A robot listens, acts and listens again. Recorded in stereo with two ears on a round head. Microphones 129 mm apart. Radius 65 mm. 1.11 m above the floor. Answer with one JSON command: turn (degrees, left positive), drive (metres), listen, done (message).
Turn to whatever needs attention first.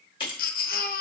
{"turn": 70}
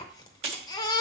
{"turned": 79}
{"turn": 30}
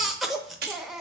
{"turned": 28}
{"done": "Found it: a baby crying, straight ahead, under 1 m away."}